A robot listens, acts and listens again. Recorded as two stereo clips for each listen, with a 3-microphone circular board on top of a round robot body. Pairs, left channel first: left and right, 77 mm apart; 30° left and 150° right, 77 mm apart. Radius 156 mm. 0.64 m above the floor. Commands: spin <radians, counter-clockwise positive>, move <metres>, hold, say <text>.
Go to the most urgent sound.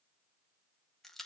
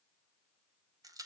hold
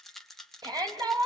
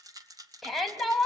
spin -1.05
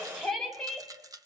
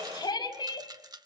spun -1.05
move 1.0
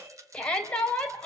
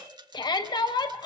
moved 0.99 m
spin 0.26
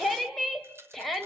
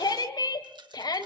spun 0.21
move 1.0
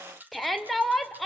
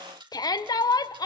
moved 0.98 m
move 1.0
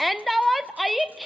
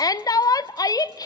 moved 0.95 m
move 1.0
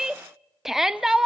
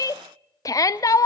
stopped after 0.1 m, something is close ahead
say Arrived at the shout, straight ahead.